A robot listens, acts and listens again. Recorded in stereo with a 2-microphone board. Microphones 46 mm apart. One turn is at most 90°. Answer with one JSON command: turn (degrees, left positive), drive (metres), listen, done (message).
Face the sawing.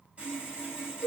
{"turn": -25}
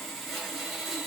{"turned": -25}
{"done": "Found it: sawing, straight ahead."}